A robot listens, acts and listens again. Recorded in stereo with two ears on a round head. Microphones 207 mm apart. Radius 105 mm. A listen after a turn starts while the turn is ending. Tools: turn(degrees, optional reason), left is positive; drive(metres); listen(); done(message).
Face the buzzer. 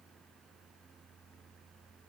listen()
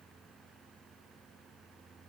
listen()
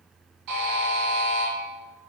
turn(degrees=-90)
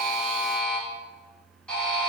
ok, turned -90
done("Facing the buzzer.")